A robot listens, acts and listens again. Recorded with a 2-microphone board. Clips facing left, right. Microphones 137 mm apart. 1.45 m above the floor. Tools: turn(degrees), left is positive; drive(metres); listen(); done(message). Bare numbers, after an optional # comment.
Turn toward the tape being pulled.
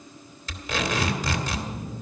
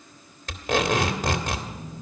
# The tape being pulled: about 55° right or 125° right.
turn(-55)
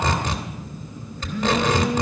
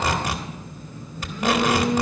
# So it is at 10° right.
turn(-10)
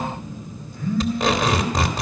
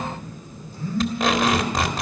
done("Found it: tape being pulled, straight ahead, 2 to 4 m away.")